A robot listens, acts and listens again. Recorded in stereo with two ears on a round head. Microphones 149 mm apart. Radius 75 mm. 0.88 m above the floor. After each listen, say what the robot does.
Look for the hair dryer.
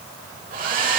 Turn 55° right.
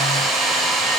Found it: a hair dryer, straight ahead, 1 to 2 m away.